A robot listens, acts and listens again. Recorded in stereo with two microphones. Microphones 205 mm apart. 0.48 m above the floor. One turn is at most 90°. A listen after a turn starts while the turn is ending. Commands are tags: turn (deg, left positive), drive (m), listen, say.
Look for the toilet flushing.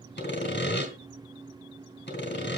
<listen/>
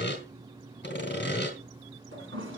<turn deg="-90"/>
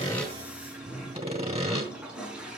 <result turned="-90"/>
<say>Facing the toilet flushing, over 4 m away.</say>